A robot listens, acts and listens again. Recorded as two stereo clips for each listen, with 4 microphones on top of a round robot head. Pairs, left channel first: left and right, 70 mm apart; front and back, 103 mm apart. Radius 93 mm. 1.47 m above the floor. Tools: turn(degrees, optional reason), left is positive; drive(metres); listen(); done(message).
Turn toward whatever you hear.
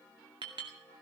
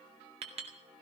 turn(degrees=-135, reason="The clink: 135° right.")
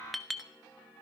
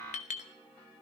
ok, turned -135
done("Found it: a clink, straight ahead.")